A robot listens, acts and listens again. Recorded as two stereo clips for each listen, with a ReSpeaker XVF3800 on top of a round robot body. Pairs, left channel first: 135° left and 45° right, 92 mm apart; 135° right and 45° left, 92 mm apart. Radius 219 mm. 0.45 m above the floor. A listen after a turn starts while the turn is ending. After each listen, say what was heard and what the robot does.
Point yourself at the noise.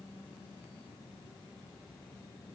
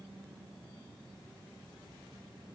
Keep listening.
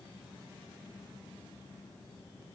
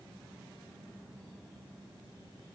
Keep listening.
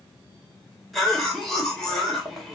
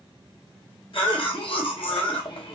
The cough: 135° right. Turn 135° right.
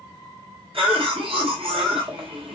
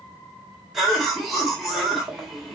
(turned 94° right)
The cough is now 45° right. Turn 45° right.
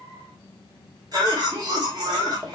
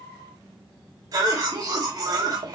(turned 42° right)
Found it: a cough, straight ahead, 2 to 4 m away.